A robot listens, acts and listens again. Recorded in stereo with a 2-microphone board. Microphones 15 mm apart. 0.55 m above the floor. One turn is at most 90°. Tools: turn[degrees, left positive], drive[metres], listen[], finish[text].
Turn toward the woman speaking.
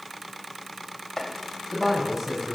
Thought: The woman speaking: about 15° right or 165° right.
Action: turn[-15]
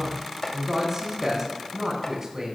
Thought: So it is at 150° right.
Action: turn[-90]
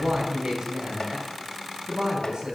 Thought: The woman speaking is now 70° right.
Action: turn[-70]
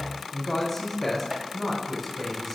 Thought: The woman speaking is now 10° left.
Action: turn[10]
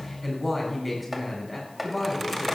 Action: finish[Facing the woman speaking.]